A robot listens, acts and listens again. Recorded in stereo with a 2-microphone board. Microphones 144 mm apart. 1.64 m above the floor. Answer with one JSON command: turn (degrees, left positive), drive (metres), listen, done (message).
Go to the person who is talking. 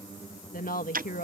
{"turn": 70}
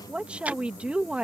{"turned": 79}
{"turn": -10}
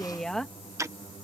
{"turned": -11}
{"drive": 1.0}
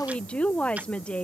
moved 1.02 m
{"turn": 10}
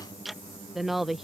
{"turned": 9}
{"drive": 1.0}
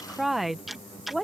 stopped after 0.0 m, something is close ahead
{"done": "I am next to the woman speaking."}